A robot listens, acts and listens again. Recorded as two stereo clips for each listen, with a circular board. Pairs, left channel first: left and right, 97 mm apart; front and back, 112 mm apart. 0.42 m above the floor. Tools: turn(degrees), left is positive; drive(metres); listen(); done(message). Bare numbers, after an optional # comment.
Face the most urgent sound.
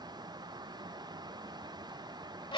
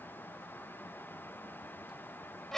listen()
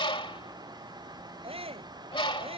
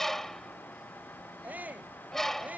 # The shout: 105° right.
turn(-105)
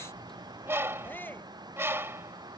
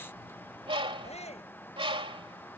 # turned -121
# The shout is now 20° left.
turn(20)
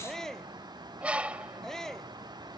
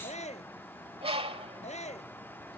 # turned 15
done("Facing the shout.")